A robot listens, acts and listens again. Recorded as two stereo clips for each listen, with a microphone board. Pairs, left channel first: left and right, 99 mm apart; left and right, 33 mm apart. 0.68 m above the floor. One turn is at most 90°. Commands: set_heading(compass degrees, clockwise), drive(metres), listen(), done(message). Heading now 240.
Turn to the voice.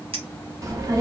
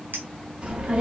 set_heading(275)
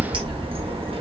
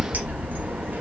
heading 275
set_heading(5)
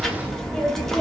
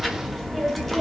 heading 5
done("Facing the child speaking, under 1 m away.")